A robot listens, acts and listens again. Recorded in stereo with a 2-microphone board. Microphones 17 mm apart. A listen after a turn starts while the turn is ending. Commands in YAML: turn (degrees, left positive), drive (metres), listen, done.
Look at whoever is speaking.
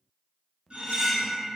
listen: true
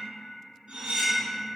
listen: true
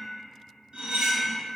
done: "I can't make out anyone speaking to turn to."